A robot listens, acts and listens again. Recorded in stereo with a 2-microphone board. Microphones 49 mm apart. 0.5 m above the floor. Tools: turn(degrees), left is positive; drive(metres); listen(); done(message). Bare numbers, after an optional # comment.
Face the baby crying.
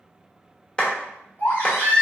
# The baby crying: about 45° left or 135° left.
turn(45)
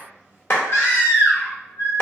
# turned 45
# So it is at 80° left.
turn(80)
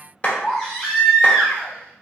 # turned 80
done("Facing the baby crying.")